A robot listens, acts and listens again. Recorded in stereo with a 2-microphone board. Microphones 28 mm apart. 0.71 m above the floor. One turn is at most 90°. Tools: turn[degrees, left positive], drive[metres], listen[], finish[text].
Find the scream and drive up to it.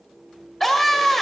Action: turn[30]
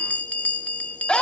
Thought: So it is at 145° left.
Action: turn[90]
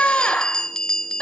Thought: The scream is now 60° left.
Action: turn[60]
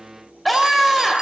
Action: drive[1.0]
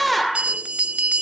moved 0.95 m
Action: drive[1.0]
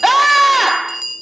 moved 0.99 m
Action: drive[1.0]
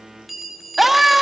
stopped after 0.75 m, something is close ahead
Thought: The scream is now 10° right.
Action: turn[-10]
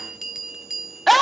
Action: finish[Arrived at the scream, straight ahead.]